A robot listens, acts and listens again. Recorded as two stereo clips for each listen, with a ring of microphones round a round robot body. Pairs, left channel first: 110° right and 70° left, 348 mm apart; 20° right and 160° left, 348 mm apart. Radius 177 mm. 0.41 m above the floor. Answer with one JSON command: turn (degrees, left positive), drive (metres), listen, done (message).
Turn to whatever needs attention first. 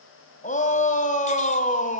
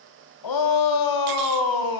{"turn": -45}
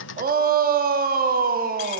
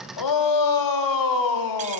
{"done": "Found it: a shout, straight ahead."}